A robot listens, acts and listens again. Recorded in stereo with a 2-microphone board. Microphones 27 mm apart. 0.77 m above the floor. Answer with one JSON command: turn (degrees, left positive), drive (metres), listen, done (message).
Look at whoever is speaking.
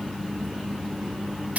{"listen": true}
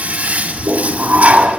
{"listen": true}
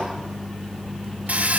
{"done": "I can't make out anyone speaking, only a toilet flushing."}